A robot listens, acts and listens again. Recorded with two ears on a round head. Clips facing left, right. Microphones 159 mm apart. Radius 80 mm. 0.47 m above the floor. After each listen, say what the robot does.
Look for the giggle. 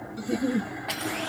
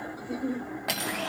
Turn 30° left.
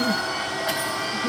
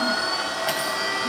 Keep listening.
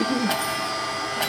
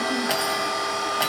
Keep listening.
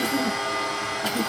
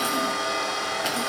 I heard a giggle, but can't make it out now. It was about straight ahead or 120° left.